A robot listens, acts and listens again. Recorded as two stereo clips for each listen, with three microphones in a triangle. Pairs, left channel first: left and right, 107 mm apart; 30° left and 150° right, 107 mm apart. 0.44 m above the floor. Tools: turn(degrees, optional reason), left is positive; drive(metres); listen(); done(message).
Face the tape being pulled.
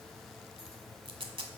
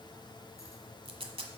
turn(degrees=-120, reason="The tape being pulled: 120° right.")
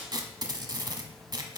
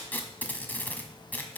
turn(degrees=-45, reason="The tape being pulled is now 45° right.")
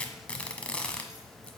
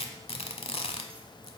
turn(degrees=10, reason="The tape being pulled is now 10° left.")
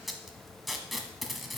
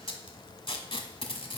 done("Found it: tape being pulled, straight ahead.")